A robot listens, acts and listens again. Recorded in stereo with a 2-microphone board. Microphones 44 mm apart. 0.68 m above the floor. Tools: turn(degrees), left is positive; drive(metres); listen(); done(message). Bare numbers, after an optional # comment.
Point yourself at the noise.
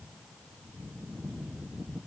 listen()
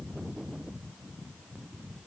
listen()
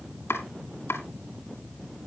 turn(90)
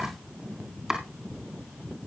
# So it is at 10° right.
turn(-10)
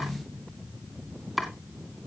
done("Facing the chopping, 2 to 4 m away.")